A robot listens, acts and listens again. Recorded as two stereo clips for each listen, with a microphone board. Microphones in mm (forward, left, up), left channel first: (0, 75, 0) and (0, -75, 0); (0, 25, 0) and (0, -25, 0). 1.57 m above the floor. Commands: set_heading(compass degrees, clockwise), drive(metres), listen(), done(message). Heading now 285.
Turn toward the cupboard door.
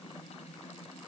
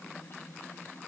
listen()
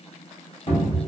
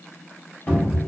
set_heading(250)
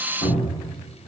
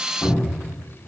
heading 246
set_heading(141)
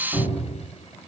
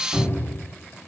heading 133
done("Facing the cupboard door.")